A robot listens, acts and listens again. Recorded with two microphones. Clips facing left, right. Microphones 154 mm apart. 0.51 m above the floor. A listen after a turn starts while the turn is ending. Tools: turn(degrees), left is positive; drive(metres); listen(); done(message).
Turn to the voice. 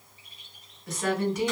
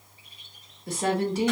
turn(degrees=-30)
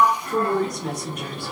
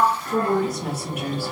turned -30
done("Found it: a woman speaking, straight ahead.")